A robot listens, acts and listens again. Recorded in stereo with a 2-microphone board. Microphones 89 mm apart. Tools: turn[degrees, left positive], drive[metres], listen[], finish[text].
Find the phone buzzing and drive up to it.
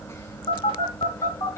Thought: The phone buzzing: about 75° left or 105° left.
Action: turn[75]
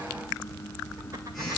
Action: drive[1.0]
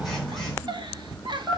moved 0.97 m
Action: drive[1.0]
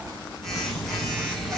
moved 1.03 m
Action: drive[1.0]
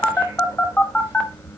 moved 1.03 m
Thought: The phone buzzing is now 15° left.
Action: turn[15]
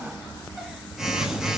Action: drive[1.0]
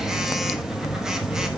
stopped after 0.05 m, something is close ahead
Action: finish[I am next to the phone buzzing.]